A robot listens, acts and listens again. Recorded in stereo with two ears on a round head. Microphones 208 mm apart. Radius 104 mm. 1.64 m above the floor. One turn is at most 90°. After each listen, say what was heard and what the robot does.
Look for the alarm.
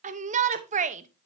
Keep listening.
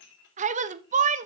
Keep listening.
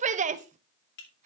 I can't make out an alarm, only a shout and dishes clattering.